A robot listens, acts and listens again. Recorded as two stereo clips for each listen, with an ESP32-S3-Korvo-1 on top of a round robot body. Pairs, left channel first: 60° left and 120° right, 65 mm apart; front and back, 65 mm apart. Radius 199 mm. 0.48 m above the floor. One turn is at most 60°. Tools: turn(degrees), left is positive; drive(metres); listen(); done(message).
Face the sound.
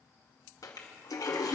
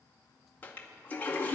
turn(degrees=60)
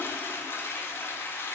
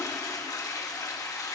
turn(degrees=10)
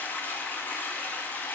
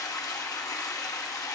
done("Facing the toilet flushing.")